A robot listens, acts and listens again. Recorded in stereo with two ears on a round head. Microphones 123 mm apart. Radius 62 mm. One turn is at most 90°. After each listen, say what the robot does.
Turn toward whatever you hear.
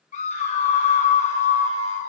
Turn 50° left.
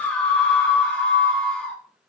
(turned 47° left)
Turn 10° left.
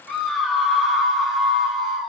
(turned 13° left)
Found it: a scream, straight ahead.